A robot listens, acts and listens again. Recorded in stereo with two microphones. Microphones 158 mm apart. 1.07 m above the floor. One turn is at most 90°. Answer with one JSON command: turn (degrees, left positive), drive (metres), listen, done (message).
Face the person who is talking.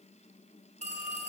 {"listen": true}
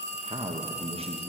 {"turn": -40}
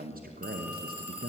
{"turn": -90}
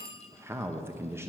{"turn": -15}
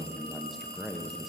{"done": "Found it: a man speaking, straight ahead, under 1 m away."}